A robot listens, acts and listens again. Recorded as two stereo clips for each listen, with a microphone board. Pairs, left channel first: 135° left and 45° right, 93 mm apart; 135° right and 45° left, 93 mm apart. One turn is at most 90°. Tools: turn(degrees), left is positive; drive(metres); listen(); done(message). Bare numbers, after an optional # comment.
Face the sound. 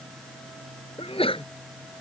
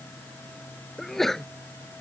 # The sneeze: 140° left.
turn(90)
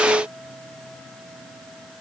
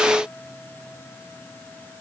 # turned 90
# Nothing new. It was at 50° left.
turn(50)
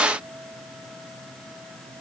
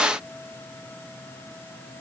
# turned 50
done("Facing where the sneeze came from. I can't hear it now.")